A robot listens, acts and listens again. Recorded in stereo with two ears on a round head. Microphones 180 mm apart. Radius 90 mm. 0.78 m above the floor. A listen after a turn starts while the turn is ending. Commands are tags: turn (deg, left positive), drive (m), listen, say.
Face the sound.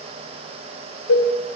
<turn deg="75"/>
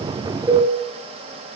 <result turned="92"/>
<turn deg="-15"/>
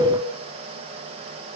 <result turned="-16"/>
<listen/>
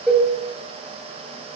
<say>Found it: a cowbell, straight ahead, 2 to 4 m away.</say>